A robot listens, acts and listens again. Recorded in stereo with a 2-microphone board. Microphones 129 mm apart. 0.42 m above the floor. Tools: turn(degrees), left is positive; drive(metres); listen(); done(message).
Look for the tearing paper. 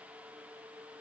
listen()
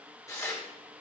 turn(degrees=20)
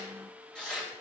done("Facing the tearing paper, 1 to 2 m away.")